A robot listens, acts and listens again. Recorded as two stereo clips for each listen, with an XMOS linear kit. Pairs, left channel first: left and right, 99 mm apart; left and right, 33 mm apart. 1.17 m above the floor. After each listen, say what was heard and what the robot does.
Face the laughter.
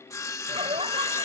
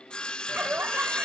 Turn 90° right.
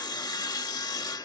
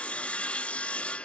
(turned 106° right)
Nothing new. It was at 15° left. Turn 15° left.
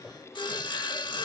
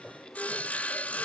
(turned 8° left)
Found it: laughter, straight ahead.